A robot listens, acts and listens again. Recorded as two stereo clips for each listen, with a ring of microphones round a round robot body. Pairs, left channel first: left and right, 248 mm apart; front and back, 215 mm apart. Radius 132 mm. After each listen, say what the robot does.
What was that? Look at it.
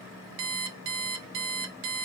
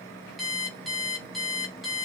Turn 90° right.
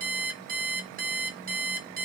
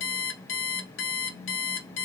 Turn 35° right.
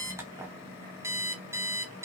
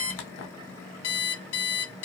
Turn 10° right.
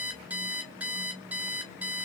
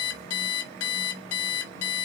Found it: an alarm clock, straight ahead.